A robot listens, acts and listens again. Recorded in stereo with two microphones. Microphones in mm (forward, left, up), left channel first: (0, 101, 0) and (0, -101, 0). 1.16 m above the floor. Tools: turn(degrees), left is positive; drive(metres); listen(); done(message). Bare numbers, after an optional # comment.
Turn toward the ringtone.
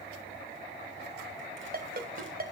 # The ringtone: about 50° right or 130° right.
turn(-50)
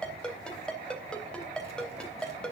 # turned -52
done("Found it: a ringtone, straight ahead.")